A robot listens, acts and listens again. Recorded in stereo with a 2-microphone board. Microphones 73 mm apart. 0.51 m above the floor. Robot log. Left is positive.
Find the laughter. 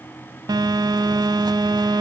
cmd idle
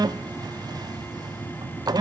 cmd idle
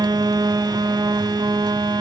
end: I can't make out laughter to turn to.